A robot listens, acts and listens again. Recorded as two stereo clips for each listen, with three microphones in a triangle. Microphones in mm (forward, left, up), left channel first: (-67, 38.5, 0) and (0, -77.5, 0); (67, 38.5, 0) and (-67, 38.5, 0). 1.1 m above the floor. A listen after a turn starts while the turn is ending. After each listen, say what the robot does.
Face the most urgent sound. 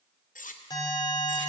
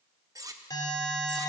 Turn 60° left.
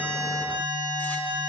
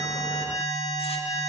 Turn 10° right.
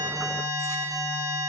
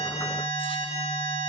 Facing the alarm, 2 to 4 m away.